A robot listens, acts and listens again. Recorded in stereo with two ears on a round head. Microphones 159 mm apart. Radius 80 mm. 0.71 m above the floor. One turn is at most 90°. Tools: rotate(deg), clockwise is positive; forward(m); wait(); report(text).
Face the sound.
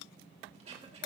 rotate(40)
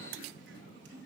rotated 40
wait()
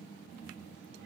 wait()
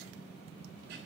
report("I heard throat clearing, but can't make it out now. It was about straight ahead or 100° right.")